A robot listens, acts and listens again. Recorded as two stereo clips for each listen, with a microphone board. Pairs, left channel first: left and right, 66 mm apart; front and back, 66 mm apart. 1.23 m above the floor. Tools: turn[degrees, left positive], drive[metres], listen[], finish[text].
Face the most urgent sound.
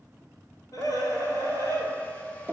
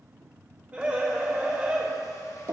Thought: The scream: 115° left.
Action: turn[115]
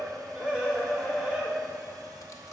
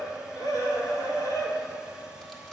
Thought: The scream is now 15° right.
Action: turn[-15]
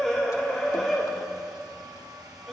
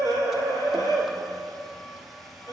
Action: finish[Facing the scream, 2 to 4 m away.]